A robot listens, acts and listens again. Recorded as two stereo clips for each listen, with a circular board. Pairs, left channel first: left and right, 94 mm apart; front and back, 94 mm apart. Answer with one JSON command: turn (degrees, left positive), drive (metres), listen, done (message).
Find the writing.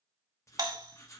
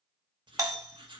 {"turn": 145}
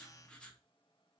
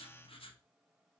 {"turn": 10}
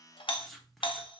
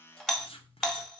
{"done": "Found it: writing, straight ahead, under 1 m away."}